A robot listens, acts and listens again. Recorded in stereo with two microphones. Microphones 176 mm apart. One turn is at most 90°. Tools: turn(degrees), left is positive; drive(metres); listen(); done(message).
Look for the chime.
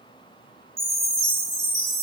turn(degrees=-15)
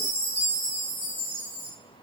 turn(degrees=-90)
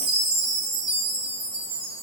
turn(degrees=-65)
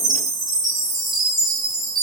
done("Facing the chime.")